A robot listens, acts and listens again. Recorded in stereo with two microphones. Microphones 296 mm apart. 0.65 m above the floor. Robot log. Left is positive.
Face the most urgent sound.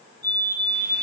note: The fire alarm: about 70° right or 110° right.
cmd yaw -70
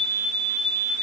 note: So it is at 20° right.
cmd yaw -20
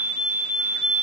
end: Found it: a fire alarm, straight ahead.